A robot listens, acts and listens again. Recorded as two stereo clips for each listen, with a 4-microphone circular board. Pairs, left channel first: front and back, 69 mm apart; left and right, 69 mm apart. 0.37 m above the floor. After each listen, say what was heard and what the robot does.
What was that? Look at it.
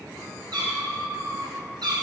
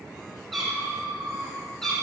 The cat meowing: 175° left. Turn 175° left.
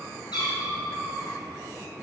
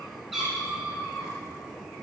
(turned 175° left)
The cat meowing is now 10° right. Turn 10° right.
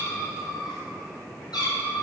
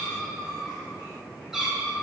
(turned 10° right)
The cat meowing is now 10° right. Turn 10° right.
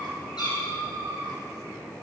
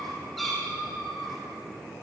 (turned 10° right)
Found it: a cat meowing, straight ahead.